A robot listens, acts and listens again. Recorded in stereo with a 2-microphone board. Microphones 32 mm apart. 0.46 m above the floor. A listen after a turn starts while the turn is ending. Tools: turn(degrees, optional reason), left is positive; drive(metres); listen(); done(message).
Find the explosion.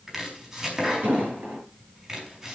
turn(degrees=-70, reason="The explosion: about 70° right or 110° right.")
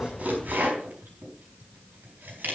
listen()
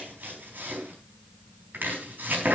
done("I heard an explosion, but can't make it out now. It was about straight ahead or 40° right.")